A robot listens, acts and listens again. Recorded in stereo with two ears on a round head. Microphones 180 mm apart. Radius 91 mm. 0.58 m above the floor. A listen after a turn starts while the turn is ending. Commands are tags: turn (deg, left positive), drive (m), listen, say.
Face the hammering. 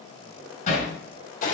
<turn deg="40"/>
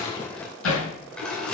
<turn deg="100"/>
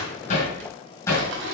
<turn deg="10"/>
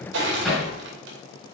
<say>Found it: hammering, straight ahead, over 4 m away.</say>